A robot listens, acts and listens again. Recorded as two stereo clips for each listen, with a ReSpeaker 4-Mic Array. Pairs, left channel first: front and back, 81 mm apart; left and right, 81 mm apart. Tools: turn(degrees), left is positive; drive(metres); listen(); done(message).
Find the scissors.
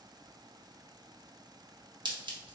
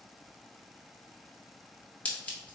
turn(degrees=160)
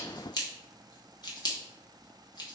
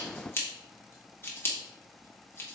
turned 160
turn(degrees=30)
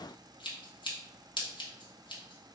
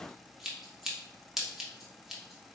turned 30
done("Found it: scissors, straight ahead.")